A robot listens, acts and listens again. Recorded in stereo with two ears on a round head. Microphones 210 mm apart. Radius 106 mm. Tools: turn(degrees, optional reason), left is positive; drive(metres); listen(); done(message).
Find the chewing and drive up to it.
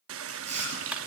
turn(degrees=-30, reason="The chewing: about 30° right or 150° right.")
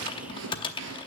turn(degrees=-120, reason="So it is at 120° right.")
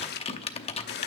listen()
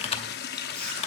listen()
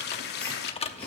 done("Facing where the chewing came from. I can't hear it now. I did not reach it.")